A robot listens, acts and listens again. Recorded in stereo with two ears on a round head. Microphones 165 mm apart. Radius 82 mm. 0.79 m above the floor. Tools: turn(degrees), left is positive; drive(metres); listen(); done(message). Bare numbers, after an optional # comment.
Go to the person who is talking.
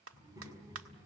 # The child speaking: about 20° right or 160° right.
turn(-20)
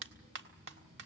# So it is at 140° right.
turn(-140)
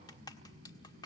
# The child speaking is now 50° right.
turn(-50)
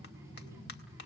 # The child speaking is now 15° right.
turn(-15)
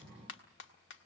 drive(1.0)
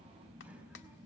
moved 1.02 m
drive(1.0)
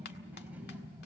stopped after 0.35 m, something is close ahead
# The child speaking is now 10° right.
turn(-10)
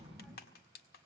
done("Something is in my way. I am facing the child speaking but have not reached it.")